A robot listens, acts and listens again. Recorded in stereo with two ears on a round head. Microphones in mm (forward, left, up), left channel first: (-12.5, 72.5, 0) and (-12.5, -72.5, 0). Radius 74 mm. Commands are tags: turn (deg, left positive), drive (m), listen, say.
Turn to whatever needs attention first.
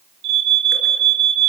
<turn deg="-60"/>
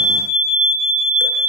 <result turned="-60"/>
<say>Facing the alarm.</say>